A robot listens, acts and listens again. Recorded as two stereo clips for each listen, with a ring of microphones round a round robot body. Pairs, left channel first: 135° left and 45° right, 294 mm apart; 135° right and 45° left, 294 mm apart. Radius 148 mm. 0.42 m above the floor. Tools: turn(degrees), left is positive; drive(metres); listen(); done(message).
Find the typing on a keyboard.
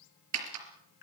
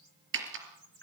done("Facing the typing on a keyboard.")